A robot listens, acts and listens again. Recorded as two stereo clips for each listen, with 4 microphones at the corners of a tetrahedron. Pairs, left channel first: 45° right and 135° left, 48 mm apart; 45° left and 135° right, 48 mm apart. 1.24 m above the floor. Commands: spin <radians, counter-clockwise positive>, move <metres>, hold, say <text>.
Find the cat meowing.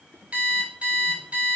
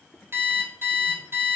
hold
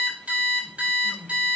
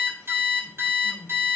hold
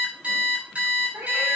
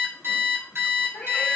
spin 1.75
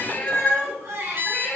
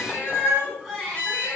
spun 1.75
spin 0.35
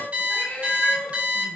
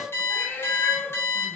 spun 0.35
say Found it: a cat meowing, straight ahead.